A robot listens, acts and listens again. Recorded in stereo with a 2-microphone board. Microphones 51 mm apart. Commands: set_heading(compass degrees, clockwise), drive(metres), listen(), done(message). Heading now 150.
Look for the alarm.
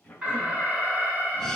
set_heading(180)
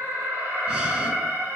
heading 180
set_heading(300)
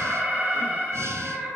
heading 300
set_heading(325)
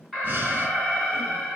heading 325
done("Facing the alarm, 2 to 4 m away.")